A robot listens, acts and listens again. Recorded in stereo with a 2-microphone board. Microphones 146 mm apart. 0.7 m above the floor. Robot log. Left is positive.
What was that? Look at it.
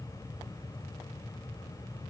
cmd idle
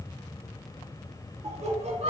note: The laughter: about 45° right or 135° right.
cmd yaw -45
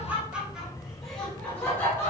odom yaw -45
note: So it is at 15° left.
cmd yaw +15
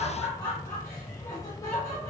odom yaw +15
note: The laughter is now 20° left.
cmd yaw +20
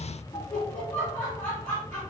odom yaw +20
note: The laughter is now 10° left.
cmd yaw +10
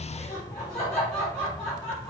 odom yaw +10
end: Found it: laughter, straight ahead, 1 to 2 m away.